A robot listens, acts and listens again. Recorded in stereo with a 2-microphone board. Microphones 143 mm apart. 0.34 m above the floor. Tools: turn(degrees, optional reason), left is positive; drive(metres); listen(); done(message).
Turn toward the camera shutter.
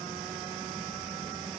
listen()
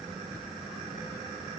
listen()
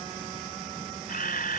turn(degrees=90)
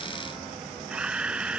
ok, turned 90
done("Facing the camera shutter.")